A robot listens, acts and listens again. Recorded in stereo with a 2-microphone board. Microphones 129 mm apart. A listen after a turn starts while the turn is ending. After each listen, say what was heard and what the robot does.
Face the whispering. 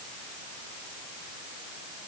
Keep listening.
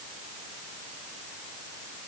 Keep listening.
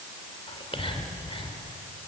The whispering: about 45° left or 135° left. Turn 45° left.
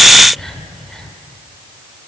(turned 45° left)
Found it: whispering, straight ahead.